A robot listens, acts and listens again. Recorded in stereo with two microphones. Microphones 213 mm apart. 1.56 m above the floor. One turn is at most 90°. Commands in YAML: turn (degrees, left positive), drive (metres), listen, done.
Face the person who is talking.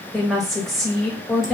turn: 30
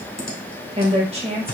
turn: -30
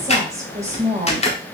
turn: -15
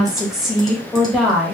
done: "Facing the woman speaking, 1 to 2 m away."